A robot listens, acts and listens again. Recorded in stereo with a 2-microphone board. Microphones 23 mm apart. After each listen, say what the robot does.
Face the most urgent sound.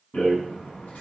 Keep listening.
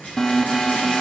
Turn 30° left.
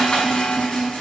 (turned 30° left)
Turn 120° left.
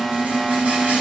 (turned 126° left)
Facing the alarm.